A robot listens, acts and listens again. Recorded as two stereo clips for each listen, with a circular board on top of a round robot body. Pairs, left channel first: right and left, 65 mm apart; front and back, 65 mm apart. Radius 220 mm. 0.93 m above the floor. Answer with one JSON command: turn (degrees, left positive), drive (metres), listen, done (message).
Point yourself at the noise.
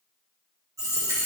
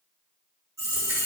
{"turn": 135}
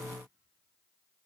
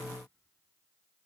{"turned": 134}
{"done": "I heard a dropped coin from this way, but can't make it out now."}